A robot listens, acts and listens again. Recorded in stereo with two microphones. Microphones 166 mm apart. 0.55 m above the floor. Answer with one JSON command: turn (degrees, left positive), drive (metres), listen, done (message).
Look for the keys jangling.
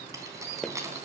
{"turn": -15}
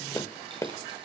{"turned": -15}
{"listen": true}
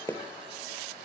{"listen": true}
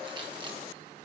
{"done": "I heard keys jangling, but can't make it out now. It was about straight ahead or 150° right."}